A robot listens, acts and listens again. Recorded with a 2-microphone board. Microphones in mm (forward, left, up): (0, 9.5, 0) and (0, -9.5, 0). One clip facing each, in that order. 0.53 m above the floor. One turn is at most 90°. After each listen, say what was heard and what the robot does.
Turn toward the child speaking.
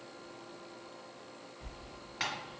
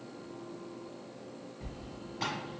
Keep listening.
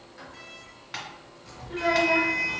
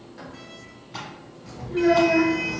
The child speaking: about 50° left or 130° left. Turn 50° left.
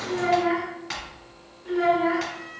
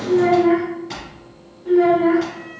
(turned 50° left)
Facing the child speaking, under 1 m away.